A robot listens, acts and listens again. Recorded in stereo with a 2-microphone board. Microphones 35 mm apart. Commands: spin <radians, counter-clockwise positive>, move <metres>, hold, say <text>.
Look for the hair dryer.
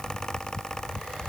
hold
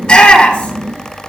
hold
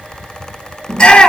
say I can't make out a hair dryer to turn to.